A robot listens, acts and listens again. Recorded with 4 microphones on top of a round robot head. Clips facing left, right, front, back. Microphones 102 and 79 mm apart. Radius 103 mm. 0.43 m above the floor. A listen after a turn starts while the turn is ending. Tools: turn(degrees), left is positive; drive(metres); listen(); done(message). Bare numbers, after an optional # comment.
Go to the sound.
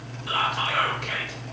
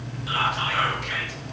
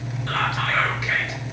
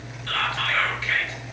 # The whispering: 70° left.
turn(70)
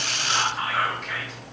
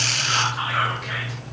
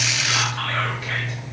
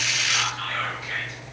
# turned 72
drive(1.0)
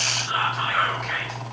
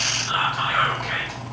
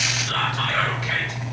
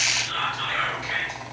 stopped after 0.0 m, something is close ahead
done("Something is in my way. I am facing the whispering but have not reached it.")